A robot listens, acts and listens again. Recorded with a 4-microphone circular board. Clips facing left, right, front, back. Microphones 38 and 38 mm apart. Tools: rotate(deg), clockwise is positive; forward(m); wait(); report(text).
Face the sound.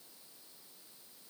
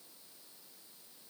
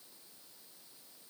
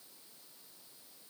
wait()
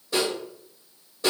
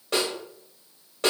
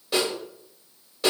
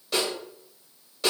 rotate(80)
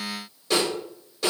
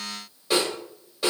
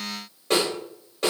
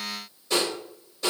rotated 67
rotate(15)
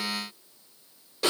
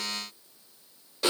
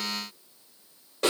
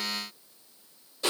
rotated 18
report("Found it: a snare drum, straight ahead.")